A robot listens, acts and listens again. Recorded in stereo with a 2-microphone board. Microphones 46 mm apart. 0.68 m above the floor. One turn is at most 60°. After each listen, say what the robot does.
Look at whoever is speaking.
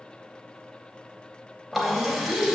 Turn 55° left.
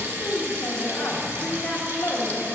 Turn 60° left.
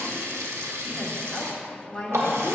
Turn 15° left.
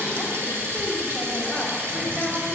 Keep listening.
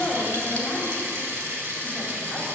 Found it: a woman speaking, straight ahead, 1 to 2 m away.